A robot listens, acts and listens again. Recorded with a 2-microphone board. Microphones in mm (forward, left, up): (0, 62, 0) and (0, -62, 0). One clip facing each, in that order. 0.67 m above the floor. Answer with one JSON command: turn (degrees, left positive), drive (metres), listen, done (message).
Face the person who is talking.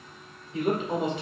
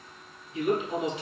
{"turn": 60}
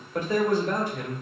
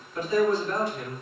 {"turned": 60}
{"turn": 60}
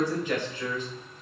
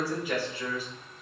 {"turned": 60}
{"turn": -10}
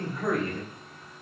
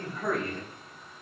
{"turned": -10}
{"done": "Found it: a man speaking, straight ahead."}